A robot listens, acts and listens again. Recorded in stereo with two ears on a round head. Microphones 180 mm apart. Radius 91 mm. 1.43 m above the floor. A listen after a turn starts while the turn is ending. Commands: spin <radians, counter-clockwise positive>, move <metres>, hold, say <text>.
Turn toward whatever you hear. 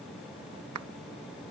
spin -1.57
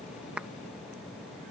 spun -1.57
hold
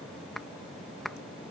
say Facing the clap.